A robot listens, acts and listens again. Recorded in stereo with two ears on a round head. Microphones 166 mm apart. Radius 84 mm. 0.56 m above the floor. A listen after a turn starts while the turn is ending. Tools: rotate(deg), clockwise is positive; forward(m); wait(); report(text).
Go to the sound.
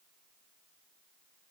wait()
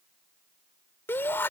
rotate(-30)
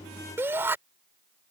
rotate(15)
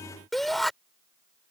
forward(1.0)
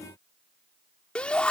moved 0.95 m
rotate(-10)
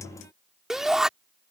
forward(1.0)
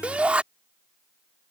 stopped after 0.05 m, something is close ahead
rotate(10)
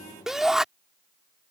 report("Arrived at the shout, straight ahead.")